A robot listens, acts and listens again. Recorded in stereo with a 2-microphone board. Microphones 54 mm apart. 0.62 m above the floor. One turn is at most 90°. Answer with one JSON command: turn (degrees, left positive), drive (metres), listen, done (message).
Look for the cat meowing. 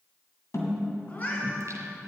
{"turn": 35}
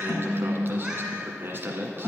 {"listen": true}
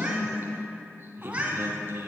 {"turn": -25}
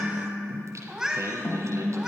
{"turn": -10}
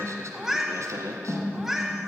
{"done": "Found it: a cat meowing, straight ahead."}